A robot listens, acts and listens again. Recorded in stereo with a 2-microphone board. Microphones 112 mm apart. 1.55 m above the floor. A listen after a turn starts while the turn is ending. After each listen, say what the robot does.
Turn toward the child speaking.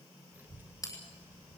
Turn 25° right.
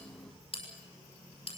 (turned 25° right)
Turn 125° right.
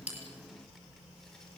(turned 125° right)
Found it: a child speaking, straight ahead, 2 to 4 m away.